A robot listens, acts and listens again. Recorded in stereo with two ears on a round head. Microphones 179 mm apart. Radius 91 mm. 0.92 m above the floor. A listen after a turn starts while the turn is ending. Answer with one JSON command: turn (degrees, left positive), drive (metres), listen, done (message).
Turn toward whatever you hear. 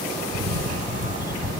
{"turn": -45}
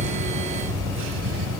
{"turn": -90}
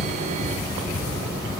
{"done": "Found it: a camera shutter, straight ahead."}